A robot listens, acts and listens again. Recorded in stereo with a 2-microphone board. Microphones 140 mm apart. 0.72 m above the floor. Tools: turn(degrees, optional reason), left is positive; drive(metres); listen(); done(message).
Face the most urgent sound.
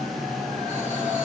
listen()
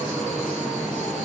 listen()
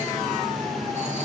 done("I can't make out anything urgent to turn to.")